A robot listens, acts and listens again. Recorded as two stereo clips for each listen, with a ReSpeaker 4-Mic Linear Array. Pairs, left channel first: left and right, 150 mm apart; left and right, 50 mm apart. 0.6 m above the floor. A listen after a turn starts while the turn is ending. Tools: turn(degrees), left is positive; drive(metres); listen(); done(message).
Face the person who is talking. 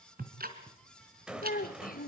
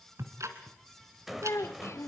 turn(degrees=75)
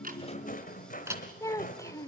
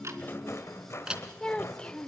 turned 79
turn(degrees=20)
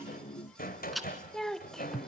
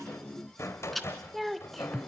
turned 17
done("Facing the child speaking, 1 to 2 m away.")